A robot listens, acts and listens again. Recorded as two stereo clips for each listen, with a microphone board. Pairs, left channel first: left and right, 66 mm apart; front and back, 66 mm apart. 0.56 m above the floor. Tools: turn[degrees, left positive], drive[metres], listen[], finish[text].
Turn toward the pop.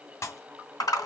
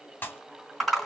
Thought: The pop: 55° left.
Action: turn[55]
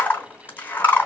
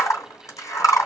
Action: finish[Facing where the pop came from. I can't hear it now.]